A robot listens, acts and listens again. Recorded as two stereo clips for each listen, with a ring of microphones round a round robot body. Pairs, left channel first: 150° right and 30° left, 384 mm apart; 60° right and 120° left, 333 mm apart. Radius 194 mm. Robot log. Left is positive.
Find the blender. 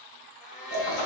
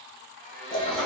note: The blender: 110° right.
cmd yaw -110
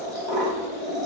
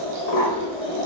cmd idle
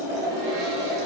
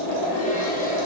cmd idle
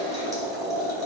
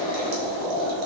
end: Facing where the blender came from. I can't hear it now.